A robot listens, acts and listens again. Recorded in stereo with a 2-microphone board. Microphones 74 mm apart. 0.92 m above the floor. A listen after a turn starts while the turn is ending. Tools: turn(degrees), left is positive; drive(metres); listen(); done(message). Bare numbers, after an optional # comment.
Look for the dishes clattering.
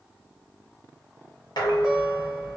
turn(90)
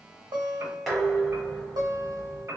done("Facing the dishes clattering.")